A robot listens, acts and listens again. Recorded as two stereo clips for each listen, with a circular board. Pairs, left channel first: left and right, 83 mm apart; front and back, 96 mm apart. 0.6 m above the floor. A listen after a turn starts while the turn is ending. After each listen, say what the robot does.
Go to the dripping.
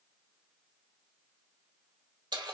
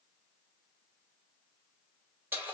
Keep listening.
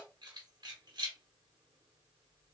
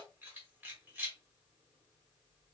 Keep listening.
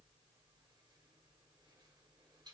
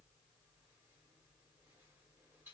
I can't make out dripping to turn to.